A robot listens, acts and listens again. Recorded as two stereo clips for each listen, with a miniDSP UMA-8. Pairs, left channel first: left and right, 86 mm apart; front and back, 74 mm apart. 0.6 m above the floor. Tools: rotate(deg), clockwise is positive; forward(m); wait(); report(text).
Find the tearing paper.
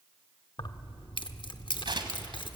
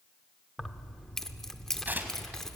rotate(115)
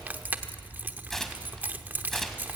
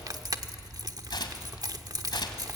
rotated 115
report("Facing the tearing paper, 1 to 2 m away.")